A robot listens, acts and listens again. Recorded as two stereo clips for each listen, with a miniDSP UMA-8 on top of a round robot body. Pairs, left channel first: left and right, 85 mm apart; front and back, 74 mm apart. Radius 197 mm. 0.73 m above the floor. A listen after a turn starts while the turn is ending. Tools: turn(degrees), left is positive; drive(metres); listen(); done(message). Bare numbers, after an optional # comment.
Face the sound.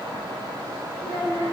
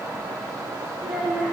# The child speaking: 105° right.
turn(-105)
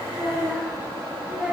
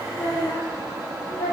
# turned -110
# The child speaking is now 15° right.
turn(-15)
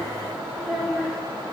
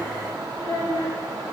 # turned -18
done("Facing the child speaking, 2 to 4 m away.")